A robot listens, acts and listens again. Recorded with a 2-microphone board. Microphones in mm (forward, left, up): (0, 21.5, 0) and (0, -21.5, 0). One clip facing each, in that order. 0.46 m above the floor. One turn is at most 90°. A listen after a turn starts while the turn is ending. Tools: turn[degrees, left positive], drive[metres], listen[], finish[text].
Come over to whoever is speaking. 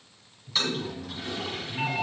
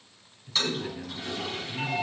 Thought: The man speaking: about 55° right or 125° right.
Action: turn[-55]
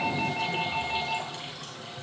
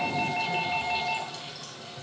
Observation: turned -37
Action: listen[]
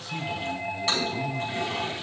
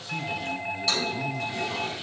Action: listen[]
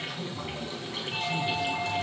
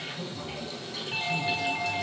Action: finish[I heard a man speaking, but can't make it out now. It was about 20° right or 90° right. I did not reach it.]